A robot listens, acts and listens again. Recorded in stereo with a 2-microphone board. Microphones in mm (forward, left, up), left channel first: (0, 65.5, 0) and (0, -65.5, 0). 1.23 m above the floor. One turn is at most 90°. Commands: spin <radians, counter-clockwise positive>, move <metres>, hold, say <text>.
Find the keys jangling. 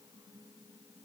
hold
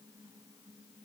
hold
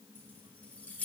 spin 0.52
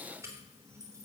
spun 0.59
spin -0.35
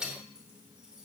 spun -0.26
say Found it: keys jangling, straight ahead.